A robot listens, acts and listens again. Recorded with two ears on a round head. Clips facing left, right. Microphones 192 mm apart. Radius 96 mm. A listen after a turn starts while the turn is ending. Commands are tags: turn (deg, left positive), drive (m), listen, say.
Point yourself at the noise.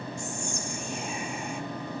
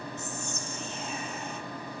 <turn deg="30"/>
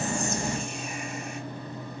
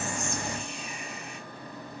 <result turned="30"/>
<listen/>
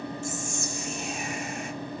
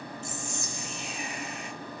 <turn deg="135"/>
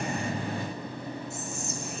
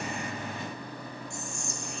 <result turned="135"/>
<say>Facing the whispering, 1 to 2 m away.</say>